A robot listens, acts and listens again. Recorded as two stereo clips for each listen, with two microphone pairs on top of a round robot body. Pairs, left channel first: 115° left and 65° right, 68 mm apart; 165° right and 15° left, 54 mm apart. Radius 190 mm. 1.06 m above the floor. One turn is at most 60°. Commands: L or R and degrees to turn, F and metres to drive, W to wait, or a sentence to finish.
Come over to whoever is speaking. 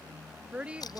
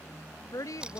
R60
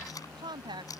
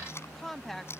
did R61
R60
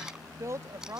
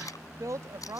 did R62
R20
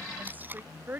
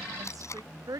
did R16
F1.0
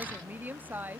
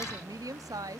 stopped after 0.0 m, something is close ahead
Something is in my way. I am facing the woman speaking but have not reached it.